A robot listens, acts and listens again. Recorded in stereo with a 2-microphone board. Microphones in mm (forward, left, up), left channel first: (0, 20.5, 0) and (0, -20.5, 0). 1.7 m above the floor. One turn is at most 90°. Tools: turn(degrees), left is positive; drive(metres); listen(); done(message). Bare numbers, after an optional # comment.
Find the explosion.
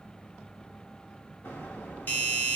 # The explosion: about 70° left or 110° left.
turn(70)
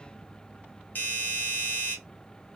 listen()
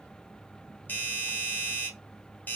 done("I heard an explosion, but can't make it out now. It was about straight ahead or 40° left.")